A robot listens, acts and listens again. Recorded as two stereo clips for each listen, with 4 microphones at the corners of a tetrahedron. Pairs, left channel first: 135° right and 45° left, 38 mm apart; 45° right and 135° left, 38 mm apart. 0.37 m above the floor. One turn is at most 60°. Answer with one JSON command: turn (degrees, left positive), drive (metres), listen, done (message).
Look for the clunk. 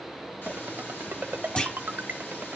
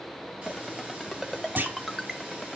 {"turn": 60}
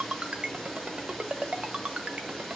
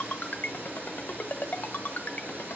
{"turn": 60}
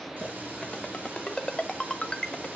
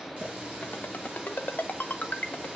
{"turn": 35}
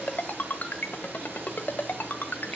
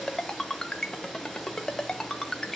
{"done": "Facing where the clunk came from. I can't hear it now."}